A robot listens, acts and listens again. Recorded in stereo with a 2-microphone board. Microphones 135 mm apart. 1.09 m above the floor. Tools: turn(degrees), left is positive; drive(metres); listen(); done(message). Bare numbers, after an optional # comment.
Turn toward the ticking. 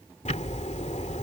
# The ticking: about 60° left or 120° left.
turn(60)
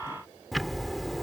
done("Facing the ticking.")